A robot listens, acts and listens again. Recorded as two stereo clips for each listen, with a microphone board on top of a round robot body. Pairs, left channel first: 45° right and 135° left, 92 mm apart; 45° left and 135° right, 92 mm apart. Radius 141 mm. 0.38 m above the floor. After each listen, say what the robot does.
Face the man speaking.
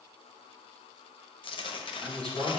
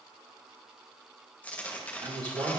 Turn 120° right.
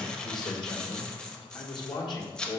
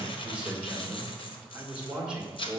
Turn 60° right.
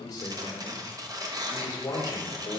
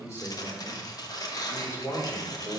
Facing the man speaking, 1 to 2 m away.